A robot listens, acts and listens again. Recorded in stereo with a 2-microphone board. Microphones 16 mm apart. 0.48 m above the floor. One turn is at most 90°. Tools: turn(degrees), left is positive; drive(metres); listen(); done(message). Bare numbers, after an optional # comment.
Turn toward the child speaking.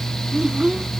# The child speaking: about 70° right or 110° right.
turn(-70)
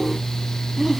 # So it is at 25° right.
turn(-25)
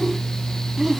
# The child speaking is now 30° right.
turn(-30)
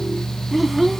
# The child speaking is now 10° right.
turn(-10)
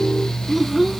# The child speaking is now 15° right.
turn(-15)
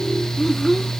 # The child speaking is now 10° right.
turn(-10)
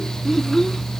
done("Found it: a child speaking, straight ahead.")